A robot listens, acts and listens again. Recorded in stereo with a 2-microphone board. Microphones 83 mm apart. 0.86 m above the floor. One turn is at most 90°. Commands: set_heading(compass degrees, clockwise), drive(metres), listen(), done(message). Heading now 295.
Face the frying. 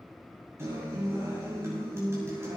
listen()
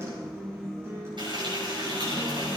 set_heading(5)
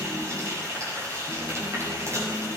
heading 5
set_heading(40)
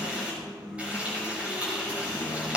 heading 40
set_heading(55)
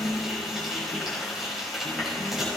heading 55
done("Facing the frying, over 4 m away.")